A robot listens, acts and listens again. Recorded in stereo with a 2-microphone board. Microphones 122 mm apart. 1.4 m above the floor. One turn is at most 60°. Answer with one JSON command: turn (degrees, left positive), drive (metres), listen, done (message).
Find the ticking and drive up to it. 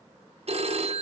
{"listen": true}
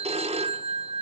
{"listen": true}
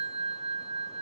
{"done": "I can't make out ticking, only a phone ringing."}